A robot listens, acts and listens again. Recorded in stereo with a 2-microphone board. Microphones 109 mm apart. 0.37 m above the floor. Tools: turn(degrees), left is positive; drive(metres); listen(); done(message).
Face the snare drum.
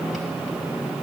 listen()
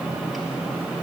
listen()
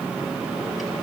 done("I can't make out a snare drum to turn to.")